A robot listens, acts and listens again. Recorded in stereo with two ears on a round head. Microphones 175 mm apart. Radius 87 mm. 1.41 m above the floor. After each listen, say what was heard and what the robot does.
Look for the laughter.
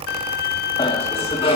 The laughter: about 30° left or 150° left. Turn 30° left.
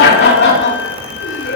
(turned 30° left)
So it is at 125° left. Turn 125° left.
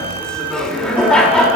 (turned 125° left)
Facing the laughter.